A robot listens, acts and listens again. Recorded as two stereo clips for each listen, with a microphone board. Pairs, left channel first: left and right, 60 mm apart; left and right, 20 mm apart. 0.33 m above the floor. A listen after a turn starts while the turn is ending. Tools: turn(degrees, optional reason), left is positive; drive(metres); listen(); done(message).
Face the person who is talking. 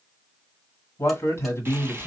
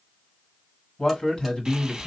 turn(degrees=45, reason="The man speaking: about 45° left or 135° left.")
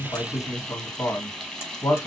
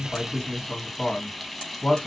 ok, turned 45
turn(degrees=80, reason="So it is at 80° left.")
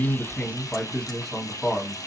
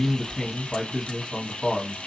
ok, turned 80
turn(degrees=10, reason="The man speaking is now 10° left.")
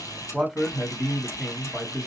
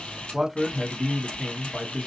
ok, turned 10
done("Facing the man speaking, 1 to 2 m away.")